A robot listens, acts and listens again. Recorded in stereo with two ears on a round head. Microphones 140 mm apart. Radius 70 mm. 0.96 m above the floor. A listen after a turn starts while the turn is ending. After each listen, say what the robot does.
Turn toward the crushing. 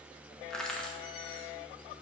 Turn 30° left.
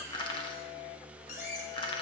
Turn 145° left.
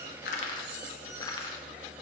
Turn 25° left.
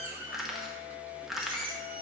Found it: crushing, straight ahead, under 1 m away.